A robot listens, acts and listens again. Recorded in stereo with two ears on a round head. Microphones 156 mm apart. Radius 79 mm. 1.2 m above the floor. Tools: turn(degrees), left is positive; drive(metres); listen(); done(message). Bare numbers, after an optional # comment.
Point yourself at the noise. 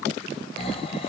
# The snoring: about 30° left or 150° left.
turn(30)
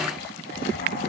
# So it is at 115° left.
turn(115)
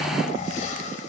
# The snoring is now 45° left.
turn(45)
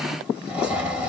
done("Found it: snoring, straight ahead, under 1 m away.")